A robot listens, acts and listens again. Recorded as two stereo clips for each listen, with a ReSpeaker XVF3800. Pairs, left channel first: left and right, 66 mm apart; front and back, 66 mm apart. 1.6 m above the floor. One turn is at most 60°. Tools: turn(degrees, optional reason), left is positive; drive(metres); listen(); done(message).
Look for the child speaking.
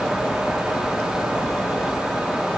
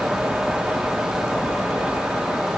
listen()
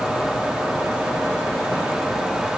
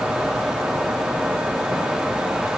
listen()
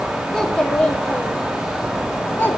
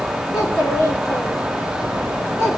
turn(degrees=35, reason="The child speaking: 35° left.")
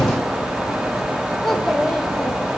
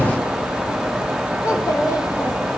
listen()
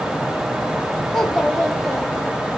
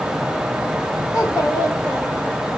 done("Found it: a child speaking, straight ahead, 1 to 2 m away.")